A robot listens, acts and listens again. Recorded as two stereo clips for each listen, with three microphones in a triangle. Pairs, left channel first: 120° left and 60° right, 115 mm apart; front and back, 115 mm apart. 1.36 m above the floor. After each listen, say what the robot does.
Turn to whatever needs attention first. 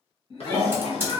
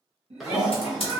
Turn 165° left.
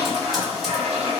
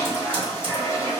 Keep listening.
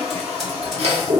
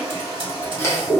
Keep listening.
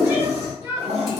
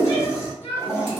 Turn 10° left.
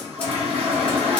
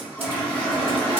Keep listening.
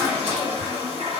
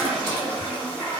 Keep listening.
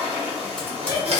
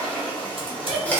Facing the shout.